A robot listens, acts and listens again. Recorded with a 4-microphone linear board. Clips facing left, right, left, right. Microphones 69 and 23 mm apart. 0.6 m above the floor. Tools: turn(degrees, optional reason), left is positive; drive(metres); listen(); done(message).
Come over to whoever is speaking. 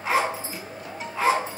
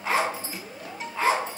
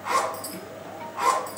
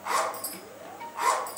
listen()
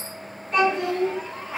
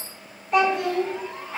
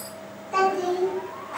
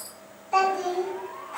turn(degrees=-30)
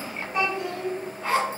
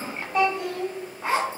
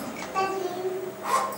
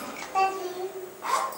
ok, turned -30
turn(degrees=15, reason="So it is at 15° left.")
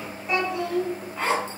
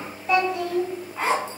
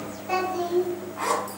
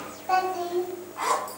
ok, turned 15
drive(metres=1.0)
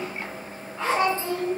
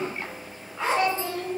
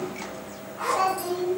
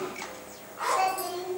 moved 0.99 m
turn(degrees=15, reason="The child speaking is now 15° left.")
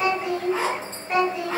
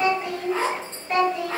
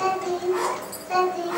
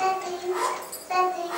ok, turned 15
drive(metres=1.0)
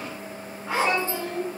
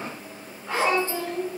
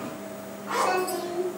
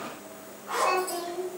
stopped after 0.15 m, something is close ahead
turn(degrees=-10, reason="The child speaking is now 10° right.")
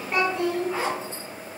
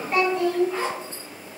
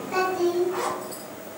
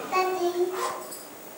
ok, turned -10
done("I am next to the child speaking.")